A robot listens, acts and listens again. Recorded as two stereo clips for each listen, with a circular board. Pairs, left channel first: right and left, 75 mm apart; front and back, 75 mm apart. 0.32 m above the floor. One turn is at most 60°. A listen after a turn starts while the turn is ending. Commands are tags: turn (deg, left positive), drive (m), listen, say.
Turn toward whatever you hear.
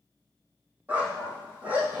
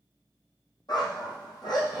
<turn deg="20"/>
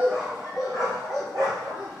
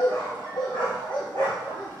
<say>Facing the dog barking, over 4 m away.</say>